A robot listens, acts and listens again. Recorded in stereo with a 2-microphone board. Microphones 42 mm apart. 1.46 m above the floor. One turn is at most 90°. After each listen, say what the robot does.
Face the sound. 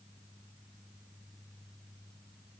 Keep listening.
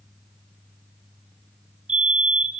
Turn 30° right.
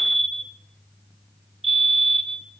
Facing the fire alarm.